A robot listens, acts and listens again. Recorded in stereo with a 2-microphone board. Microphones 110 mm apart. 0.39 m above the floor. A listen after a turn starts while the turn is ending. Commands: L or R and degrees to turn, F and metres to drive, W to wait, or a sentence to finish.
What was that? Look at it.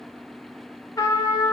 L35
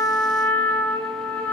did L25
L15
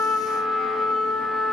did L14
Found it: a trumpet, straight ahead, under 1 m away.